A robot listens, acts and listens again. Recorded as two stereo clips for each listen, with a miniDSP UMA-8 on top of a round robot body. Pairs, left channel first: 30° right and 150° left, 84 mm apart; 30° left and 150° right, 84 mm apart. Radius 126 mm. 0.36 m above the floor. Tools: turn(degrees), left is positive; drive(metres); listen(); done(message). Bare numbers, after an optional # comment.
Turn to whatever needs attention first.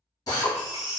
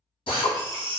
# The baby crying: 130° right.
turn(-130)
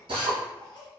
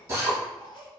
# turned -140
# Nothing new. It was at 10° left.
turn(10)
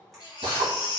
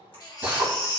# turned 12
done("Facing the baby crying.")